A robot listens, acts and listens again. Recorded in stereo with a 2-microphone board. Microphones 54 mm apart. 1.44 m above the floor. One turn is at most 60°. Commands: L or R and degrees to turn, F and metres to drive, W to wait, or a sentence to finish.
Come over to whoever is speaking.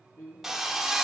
L60
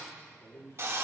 L55
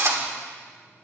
W
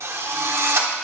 W
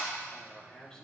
L15
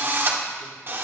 W
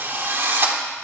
W
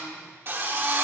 Facing where the man speaking came from. I can't hear it now. I did not reach it.